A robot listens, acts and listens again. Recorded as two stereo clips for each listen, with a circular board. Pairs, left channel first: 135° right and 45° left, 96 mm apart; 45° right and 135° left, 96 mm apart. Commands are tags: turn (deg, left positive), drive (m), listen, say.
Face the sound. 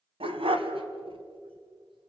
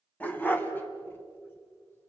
<turn deg="25"/>
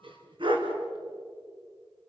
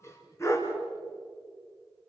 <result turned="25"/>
<turn deg="15"/>
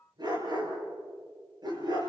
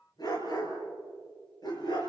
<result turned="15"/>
<say>Found it: a dog barking, straight ahead.</say>